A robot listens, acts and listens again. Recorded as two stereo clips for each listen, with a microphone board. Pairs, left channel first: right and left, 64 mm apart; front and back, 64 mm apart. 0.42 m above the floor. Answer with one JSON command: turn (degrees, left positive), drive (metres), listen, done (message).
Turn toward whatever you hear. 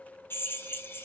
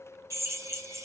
{"turn": -145}
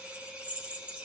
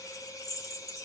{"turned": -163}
{"turn": 20}
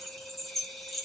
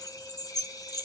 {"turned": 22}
{"done": "Facing the drill, 1 to 2 m away."}